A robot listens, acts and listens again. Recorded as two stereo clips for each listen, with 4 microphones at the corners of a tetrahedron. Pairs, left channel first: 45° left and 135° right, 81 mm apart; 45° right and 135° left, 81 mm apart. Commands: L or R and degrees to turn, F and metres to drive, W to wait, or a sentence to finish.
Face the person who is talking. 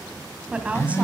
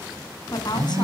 R60
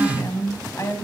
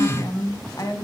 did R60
Found it: a woman speaking, straight ahead.